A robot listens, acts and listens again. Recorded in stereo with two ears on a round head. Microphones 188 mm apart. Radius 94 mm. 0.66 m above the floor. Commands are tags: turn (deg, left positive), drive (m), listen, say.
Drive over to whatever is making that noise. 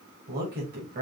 <turn deg="-50"/>
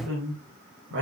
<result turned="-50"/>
<turn deg="-75"/>
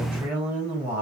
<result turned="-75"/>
<turn deg="-10"/>
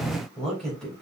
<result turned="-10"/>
<drive m="1.0"/>
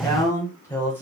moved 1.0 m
<turn deg="15"/>
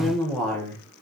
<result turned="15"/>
<drive m="1.0"/>
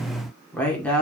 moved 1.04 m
<turn deg="10"/>
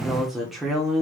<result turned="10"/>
<drive m="1.0"/>
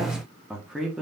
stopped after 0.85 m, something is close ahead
<say>I am next to the man speaking.</say>